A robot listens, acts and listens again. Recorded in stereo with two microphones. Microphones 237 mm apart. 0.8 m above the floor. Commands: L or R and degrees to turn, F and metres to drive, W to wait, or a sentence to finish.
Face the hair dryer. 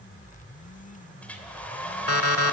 L30
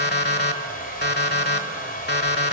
L145
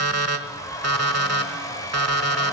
L15
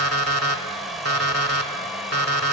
Found it: a hair dryer, straight ahead, 2 to 4 m away.